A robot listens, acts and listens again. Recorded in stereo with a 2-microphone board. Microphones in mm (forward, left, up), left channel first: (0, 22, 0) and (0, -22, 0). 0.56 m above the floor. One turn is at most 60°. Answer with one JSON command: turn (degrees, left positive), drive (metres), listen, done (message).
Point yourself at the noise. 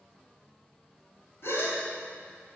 {"turn": 60}
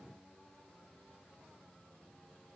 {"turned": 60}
{"listen": true}
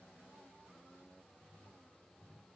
{"done": "I heard a gasp, but can't make it out now. It was about 15° left or 45° left."}